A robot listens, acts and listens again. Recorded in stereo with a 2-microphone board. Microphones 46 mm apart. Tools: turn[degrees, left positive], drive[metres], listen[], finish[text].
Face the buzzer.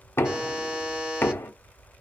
Thought: The buzzer: about 20° right or 160° right.
Action: turn[-20]
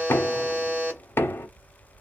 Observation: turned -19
Thought: So it is at 145° right.
Action: turn[-145]
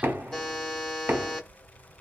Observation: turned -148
Thought: The buzzer is now 15° left.
Action: turn[15]
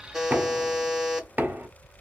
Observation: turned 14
Action: finish[Facing the buzzer, 1 to 2 m away.]